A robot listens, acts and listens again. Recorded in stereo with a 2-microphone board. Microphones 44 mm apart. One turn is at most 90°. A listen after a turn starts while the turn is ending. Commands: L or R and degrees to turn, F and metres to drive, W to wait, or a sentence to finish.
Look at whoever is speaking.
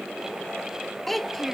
L30
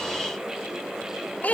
L90
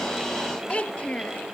L25
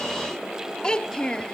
L20
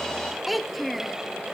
Found it: a child speaking, straight ahead.